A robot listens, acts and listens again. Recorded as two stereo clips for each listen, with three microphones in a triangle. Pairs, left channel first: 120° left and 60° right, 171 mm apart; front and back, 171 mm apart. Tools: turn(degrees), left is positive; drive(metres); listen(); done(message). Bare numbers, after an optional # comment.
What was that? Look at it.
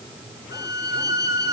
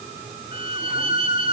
# The violin: 125° left.
turn(125)
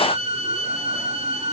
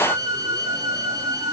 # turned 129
done("Facing the violin, 2 to 4 m away.")